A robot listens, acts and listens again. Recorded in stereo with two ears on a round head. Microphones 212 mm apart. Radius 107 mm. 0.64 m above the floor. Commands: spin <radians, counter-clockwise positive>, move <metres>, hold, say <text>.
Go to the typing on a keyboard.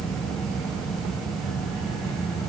hold
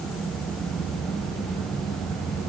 hold
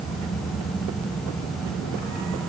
say I can't make out typing on a keyboard to turn to.